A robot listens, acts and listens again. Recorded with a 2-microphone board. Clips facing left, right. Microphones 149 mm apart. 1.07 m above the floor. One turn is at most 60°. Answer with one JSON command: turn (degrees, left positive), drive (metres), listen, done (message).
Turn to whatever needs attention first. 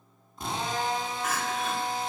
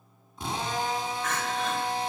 {"turn": 30}
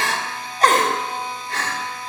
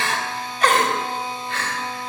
{"turn": 60}
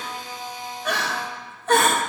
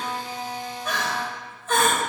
{"turn": 60}
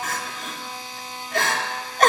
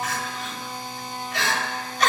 {"turn": 55}
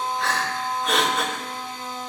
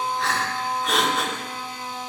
{"done": "Facing the crying."}